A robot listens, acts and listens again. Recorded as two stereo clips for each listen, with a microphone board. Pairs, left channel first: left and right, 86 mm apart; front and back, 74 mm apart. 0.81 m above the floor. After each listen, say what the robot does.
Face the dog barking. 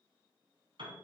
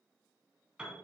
Keep listening.
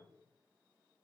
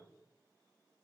Keep listening.
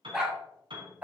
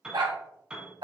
Turn 160° right.
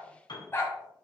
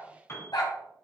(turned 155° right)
Turn 30° left.
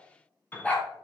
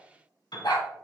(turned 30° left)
Turn 15° left.
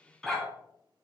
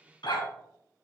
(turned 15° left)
Found it: a dog barking, straight ahead.